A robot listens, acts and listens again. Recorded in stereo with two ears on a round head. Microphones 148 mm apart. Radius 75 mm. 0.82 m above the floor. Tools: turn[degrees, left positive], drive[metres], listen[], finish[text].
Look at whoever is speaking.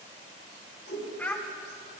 Action: turn[30]
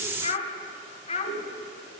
Thought: So it is at 140° left.
Action: turn[140]
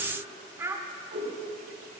Thought: The child speaking is now 15° right.
Action: turn[-15]
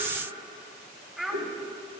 Action: finish[Found it: a child speaking, straight ahead.]